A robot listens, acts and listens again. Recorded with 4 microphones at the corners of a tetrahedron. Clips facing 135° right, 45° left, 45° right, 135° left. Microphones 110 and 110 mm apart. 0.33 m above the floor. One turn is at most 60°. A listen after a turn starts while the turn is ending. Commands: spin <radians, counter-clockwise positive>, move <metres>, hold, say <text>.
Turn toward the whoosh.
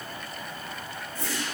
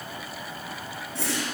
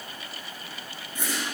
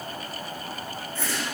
spin 0.52
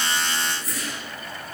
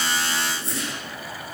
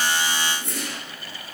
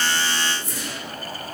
spin -0.26
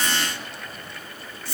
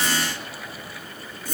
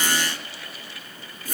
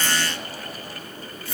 say Facing the whoosh.